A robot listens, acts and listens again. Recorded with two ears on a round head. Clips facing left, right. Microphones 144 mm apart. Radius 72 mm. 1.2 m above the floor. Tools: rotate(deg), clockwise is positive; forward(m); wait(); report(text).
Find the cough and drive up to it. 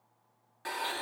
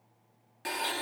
wait()
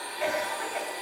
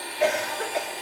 rotate(90)
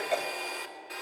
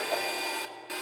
wait()
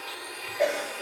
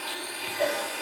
rotate(-15)
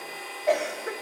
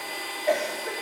forward(1.0)
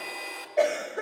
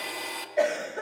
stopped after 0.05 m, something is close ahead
report("Blocked. The cough is further on, straight ahead.")